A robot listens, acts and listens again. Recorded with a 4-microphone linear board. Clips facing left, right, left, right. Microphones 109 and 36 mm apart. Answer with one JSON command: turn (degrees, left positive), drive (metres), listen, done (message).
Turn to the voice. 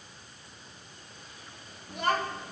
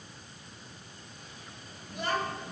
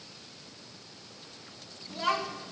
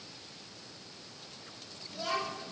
{"turn": 65}
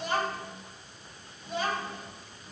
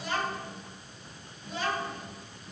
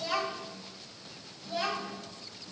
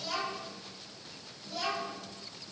{"turn": 50}
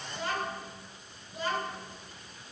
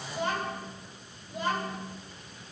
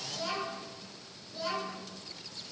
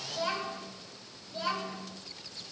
{"turn": -20}
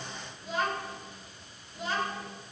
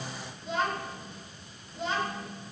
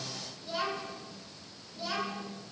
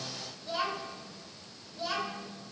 {"done": "Found it: a child speaking, straight ahead."}